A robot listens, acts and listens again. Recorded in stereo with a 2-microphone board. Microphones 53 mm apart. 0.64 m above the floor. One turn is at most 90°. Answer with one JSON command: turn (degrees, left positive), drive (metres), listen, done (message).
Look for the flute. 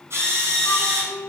{"turn": 60}
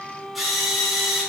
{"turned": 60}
{"turn": 25}
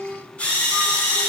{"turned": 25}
{"done": "Found it: a flute, straight ahead, 1 to 2 m away."}